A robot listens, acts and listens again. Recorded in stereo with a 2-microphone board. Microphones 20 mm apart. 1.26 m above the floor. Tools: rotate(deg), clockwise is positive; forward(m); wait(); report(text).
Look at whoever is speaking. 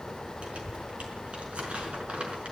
rotate(70)
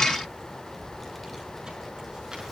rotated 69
report("Facing the child speaking.")